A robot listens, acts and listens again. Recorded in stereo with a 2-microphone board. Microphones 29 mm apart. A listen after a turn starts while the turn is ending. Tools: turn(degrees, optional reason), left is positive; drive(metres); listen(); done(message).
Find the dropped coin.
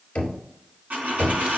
turn(degrees=-90)
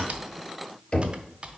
done("I heard a dropped coin from this way, but can't make it out now.")